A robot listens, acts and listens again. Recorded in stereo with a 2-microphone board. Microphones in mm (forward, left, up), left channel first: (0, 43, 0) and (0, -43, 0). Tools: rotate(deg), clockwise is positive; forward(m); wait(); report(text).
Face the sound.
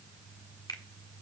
rotate(-55)
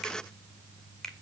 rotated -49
report("Found it: a finger snap, straight ahead, 1 to 2 m away.")